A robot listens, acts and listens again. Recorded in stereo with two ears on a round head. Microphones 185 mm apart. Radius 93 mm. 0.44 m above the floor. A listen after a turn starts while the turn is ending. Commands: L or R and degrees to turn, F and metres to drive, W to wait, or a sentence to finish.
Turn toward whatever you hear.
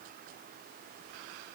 W
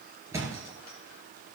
R30
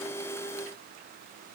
W
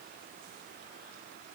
I heard a thud, but can't make it out now. It was about 15° left or 135° right.